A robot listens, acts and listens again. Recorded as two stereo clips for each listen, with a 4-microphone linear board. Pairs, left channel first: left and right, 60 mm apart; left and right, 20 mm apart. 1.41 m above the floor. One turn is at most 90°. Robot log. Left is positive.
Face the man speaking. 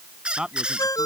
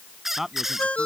cmd yaw -30
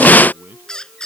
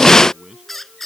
note: So it is at 145° right.
cmd yaw -90
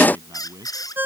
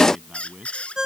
note: The man speaking is now 70° right.
cmd yaw -70
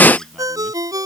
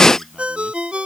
cmd idle
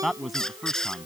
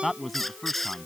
end: Found it: a man speaking, straight ahead.